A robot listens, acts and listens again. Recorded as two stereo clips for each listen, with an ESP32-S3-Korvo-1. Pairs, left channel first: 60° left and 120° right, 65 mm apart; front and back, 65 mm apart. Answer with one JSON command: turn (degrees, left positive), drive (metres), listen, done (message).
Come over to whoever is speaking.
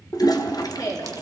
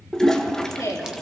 {"turn": 35}
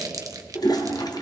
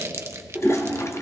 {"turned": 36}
{"listen": true}
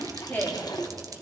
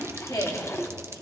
{"drive": 1.0}
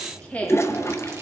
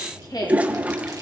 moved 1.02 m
{"drive": 1.0}
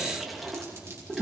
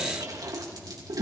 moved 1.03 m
{"listen": true}
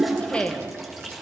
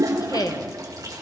{"turn": -10}
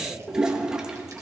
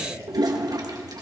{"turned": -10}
{"listen": true}
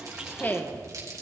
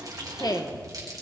{"drive": 1.0}
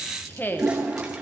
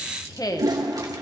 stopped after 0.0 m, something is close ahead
{"done": "Arrived at the woman speaking, straight ahead."}